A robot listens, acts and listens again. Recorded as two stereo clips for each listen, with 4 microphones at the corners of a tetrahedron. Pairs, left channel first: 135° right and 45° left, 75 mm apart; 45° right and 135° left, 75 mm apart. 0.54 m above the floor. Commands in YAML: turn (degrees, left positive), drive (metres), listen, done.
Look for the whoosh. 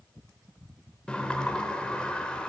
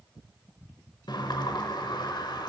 listen: true
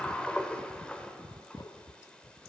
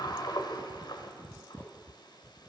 listen: true
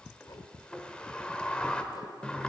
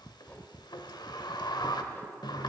done: "I can't make out a whoosh, only a sliding door."